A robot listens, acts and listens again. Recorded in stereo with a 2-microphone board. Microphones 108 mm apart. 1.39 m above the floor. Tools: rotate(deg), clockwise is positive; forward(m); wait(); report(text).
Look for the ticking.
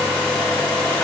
wait()
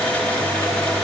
wait()
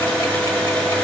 report("I can't make out ticking.")